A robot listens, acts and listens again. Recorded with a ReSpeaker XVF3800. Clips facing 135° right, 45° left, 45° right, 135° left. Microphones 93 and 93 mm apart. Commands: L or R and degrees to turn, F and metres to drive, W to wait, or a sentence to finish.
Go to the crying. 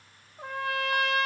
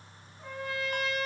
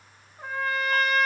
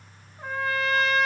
W
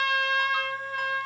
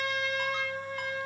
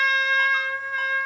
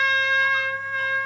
W
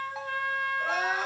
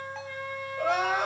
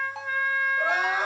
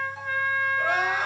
L25
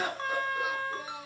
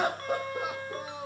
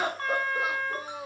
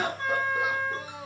L10
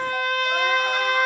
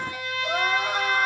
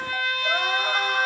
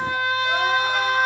W
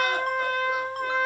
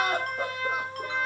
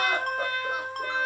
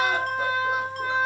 W
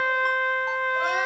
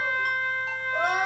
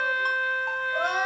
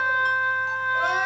Facing where the crying came from. I can't hear it now. I did not reach it.